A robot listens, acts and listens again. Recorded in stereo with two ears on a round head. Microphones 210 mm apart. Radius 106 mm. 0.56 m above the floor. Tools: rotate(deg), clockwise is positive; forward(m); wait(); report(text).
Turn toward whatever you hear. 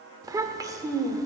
rotate(15)
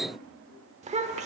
rotate(150)
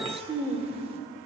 rotate(25)
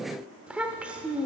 report("Facing the child speaking.")